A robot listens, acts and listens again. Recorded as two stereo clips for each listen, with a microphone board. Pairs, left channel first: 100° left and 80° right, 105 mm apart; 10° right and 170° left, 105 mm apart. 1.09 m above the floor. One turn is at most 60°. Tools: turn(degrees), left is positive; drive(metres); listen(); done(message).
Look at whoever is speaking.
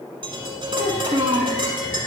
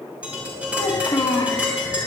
turn(degrees=-60)
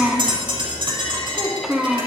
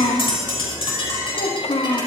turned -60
done("Facing the child speaking, 1 to 2 m away.")